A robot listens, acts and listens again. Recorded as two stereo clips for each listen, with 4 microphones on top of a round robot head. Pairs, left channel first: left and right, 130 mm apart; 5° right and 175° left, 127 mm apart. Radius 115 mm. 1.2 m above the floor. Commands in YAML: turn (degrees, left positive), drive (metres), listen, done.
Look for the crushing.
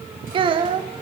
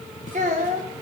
listen: true
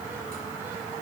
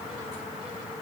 listen: true
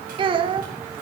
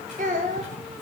done: "I can't make out crushing, only a child speaking."